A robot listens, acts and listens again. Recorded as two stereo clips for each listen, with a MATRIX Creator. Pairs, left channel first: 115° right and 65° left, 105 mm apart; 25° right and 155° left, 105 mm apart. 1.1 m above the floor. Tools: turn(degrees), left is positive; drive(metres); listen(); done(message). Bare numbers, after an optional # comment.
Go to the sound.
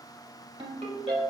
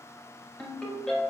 # The ringtone: 55° left.
turn(55)
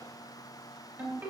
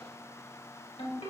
drive(1.0)
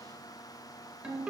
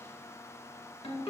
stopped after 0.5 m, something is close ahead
# The ringtone is now 10° right.
turn(-10)
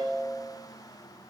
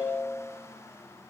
done("Blocked. The ringtone is further on, straight ahead.")